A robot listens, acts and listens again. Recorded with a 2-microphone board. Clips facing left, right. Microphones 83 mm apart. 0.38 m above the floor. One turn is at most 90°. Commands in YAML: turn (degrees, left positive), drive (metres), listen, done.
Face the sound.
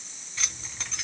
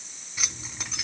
turn: -30
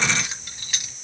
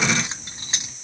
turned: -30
turn: -90
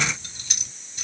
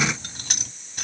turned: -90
turn: -65
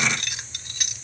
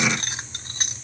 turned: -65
turn: -40
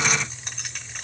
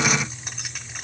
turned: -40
done: "Facing the keys jangling, 1 to 2 m away."